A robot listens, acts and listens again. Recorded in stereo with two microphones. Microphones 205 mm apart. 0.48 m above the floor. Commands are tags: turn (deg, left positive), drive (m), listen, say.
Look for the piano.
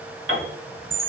<turn deg="-90"/>
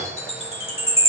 <listen/>
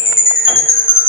<listen/>
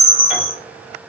<say>I heard a piano from this way, but can't make it out now.</say>